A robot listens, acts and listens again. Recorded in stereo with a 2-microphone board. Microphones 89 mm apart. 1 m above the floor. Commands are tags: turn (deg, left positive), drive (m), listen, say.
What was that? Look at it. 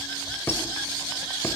<turn deg="25"/>
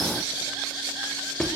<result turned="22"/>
<say>Found it: a squeak, straight ahead, 2 to 4 m away.</say>